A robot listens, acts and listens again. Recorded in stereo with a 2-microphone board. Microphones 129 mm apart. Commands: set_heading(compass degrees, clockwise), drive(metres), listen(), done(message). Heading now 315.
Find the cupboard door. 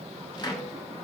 set_heading(285)
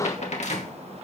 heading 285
set_heading(165)
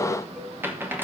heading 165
set_heading(180)
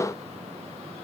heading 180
listen()
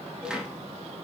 done("Facing the cupboard door.")